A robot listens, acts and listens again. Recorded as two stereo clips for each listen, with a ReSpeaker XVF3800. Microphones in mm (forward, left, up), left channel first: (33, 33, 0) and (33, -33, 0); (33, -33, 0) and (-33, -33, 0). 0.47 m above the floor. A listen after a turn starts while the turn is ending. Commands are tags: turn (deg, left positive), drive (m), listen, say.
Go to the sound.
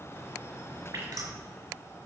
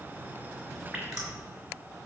<turn deg="-100"/>
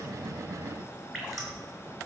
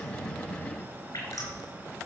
<drive m="1.0"/>
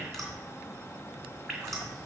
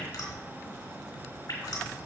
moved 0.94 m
<drive m="1.0"/>
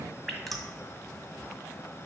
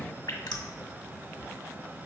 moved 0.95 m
<drive m="1.0"/>
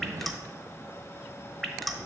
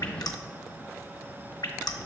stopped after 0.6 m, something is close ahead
<say>I am next to the dripping.</say>